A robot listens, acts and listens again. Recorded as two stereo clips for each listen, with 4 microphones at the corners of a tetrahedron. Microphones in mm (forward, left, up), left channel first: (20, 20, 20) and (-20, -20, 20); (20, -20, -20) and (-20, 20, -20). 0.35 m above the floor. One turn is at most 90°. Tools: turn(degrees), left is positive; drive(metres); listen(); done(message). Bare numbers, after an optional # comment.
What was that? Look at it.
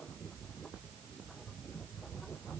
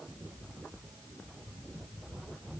listen()
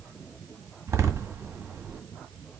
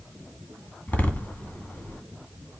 # The door slam: 105° right.
turn(-90)
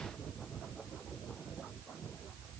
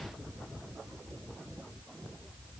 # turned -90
# Nothing new. It was at 15° right.
turn(-15)
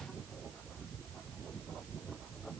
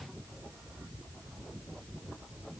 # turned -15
done("I heard a door slam from this way, but can't make it out now.")